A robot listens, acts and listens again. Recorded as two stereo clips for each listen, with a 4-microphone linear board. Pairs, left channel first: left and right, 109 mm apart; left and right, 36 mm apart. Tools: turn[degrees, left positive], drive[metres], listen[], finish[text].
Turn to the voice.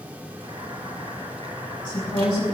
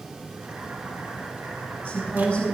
Thought: The woman speaking: about 45° left or 135° left.
Action: turn[45]
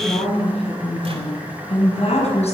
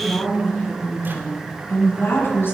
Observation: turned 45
Thought: So it is at 85° left.
Action: turn[85]
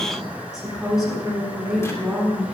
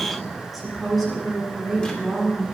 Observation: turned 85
Thought: The woman speaking is now 10° right.
Action: turn[-10]
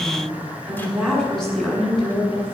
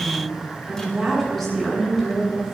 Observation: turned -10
Action: finish[Found it: a woman speaking, straight ahead, over 4 m away.]